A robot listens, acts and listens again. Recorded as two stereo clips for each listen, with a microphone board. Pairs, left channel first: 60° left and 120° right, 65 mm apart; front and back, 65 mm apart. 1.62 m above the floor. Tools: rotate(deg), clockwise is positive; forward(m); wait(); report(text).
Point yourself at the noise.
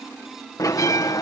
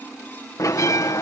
rotate(-35)
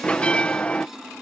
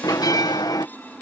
rotate(10)
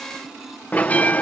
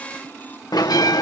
report("Facing the bell.")